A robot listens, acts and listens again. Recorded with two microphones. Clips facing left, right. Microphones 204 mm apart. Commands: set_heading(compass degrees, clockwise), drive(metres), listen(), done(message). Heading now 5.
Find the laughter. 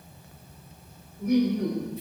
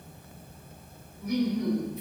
set_heading(310)
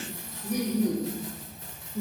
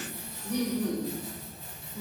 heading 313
set_heading(293)
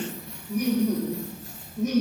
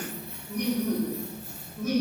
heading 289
set_heading(269)
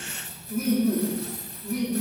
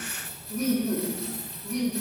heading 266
done("Facing the laughter, 1 to 2 m away.")